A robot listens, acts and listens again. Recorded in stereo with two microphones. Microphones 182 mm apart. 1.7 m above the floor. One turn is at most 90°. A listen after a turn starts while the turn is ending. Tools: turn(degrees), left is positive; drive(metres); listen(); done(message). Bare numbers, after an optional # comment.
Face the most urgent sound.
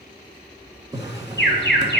# The alarm: about 75° left or 105° left.
turn(75)
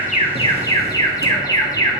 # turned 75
# So it is at 20° left.
turn(20)
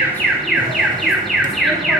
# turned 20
done("Facing the alarm, 1 to 2 m away.")